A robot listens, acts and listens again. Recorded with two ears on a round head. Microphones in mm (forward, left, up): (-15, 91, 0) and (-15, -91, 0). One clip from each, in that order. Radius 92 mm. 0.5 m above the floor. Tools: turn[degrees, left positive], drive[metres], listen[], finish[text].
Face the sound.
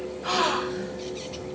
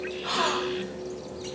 Action: turn[30]
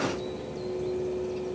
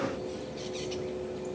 Action: listen[]
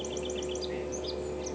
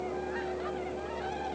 Action: finish[I heard a gasp, but can't make it out now. It was about 15° right or 135° left.]